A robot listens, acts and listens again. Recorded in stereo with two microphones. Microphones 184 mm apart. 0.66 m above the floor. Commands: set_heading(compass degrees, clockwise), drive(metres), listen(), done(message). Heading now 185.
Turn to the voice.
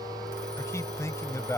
set_heading(170)
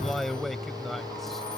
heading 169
done("Facing the man speaking.")